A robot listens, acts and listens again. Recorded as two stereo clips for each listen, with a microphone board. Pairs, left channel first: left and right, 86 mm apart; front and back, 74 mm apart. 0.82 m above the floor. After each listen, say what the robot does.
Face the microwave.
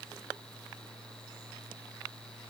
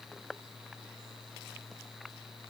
Keep listening.
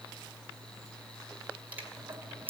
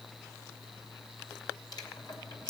Turn 20° right.
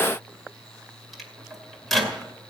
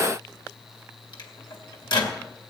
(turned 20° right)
Facing the microwave, 2 to 4 m away.